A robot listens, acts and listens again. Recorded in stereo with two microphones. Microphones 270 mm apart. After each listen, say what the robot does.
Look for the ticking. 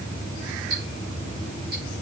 Turn 60° right.
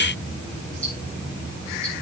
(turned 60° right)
Keep listening.
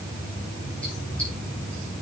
Keep listening.
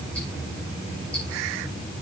I heard ticking, but can't make it out now. It was about straight ahead or 60° right.